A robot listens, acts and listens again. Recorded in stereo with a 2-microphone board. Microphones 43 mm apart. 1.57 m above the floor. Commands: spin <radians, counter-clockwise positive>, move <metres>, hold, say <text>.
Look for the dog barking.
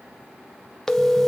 hold
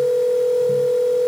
hold
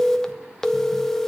say I can't make out a dog barking, only a phone ringing.